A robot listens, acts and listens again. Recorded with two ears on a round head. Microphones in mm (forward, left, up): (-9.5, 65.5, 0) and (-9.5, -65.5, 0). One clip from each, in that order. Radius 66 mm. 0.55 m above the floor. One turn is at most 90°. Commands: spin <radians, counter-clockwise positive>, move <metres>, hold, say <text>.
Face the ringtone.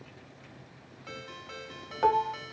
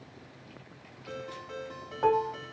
spin 1.13
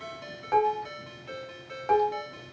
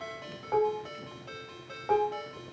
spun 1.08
say Found it: a ringtone, straight ahead, 1 to 2 m away.